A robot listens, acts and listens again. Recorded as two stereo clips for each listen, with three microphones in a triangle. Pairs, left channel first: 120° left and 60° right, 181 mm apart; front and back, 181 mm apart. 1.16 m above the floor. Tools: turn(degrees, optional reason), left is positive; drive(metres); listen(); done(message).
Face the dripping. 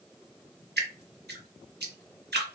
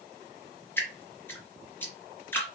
turn(degrees=-80, reason="The dripping: 80° right.")
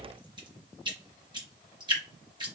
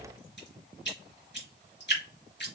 done("Found it: dripping, straight ahead.")